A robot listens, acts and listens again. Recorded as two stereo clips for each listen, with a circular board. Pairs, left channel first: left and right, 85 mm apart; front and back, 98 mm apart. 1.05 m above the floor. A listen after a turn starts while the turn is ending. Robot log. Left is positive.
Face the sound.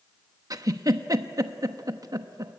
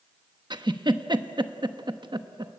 note: The giggle: 135° right.
cmd yaw -135
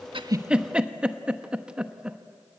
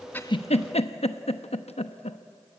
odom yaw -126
note: The giggle is now 10° right.
cmd yaw -10
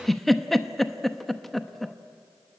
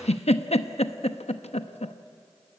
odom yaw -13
end: Found it: a giggle, straight ahead.